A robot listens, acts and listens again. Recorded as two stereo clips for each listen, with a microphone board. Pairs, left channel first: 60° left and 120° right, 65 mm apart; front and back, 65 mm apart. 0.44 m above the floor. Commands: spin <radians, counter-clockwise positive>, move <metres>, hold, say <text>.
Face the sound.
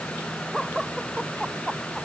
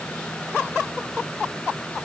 hold
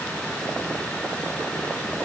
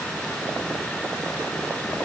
hold
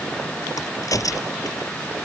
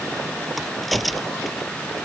spin 1.57
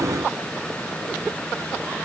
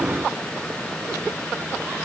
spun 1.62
say Facing where the crack came from. I can't hear it now.